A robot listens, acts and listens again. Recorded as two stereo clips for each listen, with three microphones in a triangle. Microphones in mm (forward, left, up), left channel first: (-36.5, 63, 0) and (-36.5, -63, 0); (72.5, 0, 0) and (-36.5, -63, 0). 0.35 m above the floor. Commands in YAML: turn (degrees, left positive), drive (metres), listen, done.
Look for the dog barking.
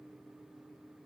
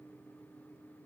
listen: true
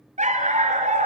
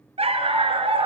turn: -105
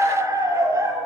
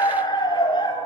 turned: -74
turn: -25
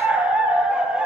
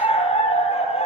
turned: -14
done: "Facing the dog barking."